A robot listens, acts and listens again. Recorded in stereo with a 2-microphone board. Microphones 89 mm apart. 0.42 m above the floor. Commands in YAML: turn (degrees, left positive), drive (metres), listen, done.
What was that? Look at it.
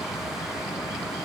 listen: true
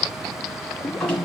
turn: 30
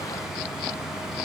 listen: true
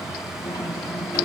listen: true
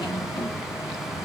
done: "I heard a drawer, but can't make it out now. It was about 15° right or 135° left."